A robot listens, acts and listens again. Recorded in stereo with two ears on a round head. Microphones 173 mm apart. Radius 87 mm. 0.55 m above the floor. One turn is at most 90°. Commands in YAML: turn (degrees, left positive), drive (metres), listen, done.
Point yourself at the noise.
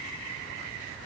listen: true
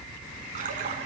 turn: -40
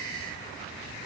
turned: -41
listen: true
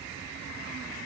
done: "I heard a splash, but can't make it out now. It was about straight ahead or 100° right."